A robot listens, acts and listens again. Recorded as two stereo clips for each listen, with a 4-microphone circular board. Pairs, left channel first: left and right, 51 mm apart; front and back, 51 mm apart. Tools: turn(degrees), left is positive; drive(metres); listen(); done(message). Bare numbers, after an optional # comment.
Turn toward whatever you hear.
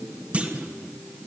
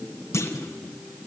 # The clunk: 30° right.
turn(-30)
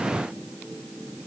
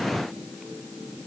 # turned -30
done("I heard a clunk from this way, but can't make it out now.")